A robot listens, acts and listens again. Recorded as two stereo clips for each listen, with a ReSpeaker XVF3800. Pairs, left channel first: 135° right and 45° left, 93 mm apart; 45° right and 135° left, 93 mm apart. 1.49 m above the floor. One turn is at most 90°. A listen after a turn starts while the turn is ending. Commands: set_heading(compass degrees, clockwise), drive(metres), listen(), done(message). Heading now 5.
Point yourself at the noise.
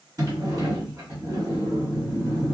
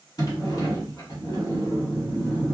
done("Found it: a sliding door, straight ahead, 1 to 2 m away.")